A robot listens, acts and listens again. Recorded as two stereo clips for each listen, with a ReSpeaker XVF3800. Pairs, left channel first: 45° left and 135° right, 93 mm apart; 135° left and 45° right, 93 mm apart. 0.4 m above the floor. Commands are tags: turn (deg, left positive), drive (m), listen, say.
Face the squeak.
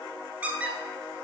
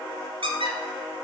<turn deg="-60"/>
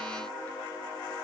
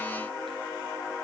<listen/>
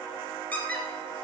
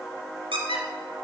<turn deg="-25"/>
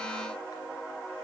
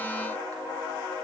<listen/>
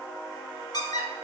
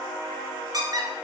<say>Facing the squeak.</say>